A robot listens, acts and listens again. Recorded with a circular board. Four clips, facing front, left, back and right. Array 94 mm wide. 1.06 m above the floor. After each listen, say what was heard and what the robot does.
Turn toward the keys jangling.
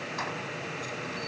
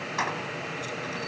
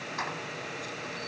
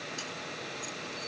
The keys jangling: 90° left. Turn 90° left.
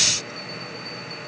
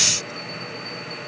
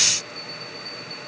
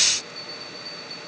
Keep listening.
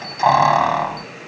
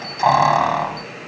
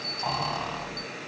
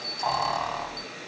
The keys jangling is now 35° left. Turn 35° left.
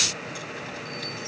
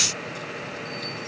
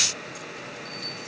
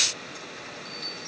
Keep listening.
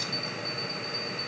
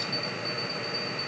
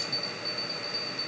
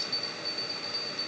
Keep listening.
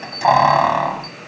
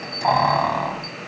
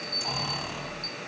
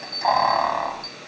Found it: keys jangling, straight ahead.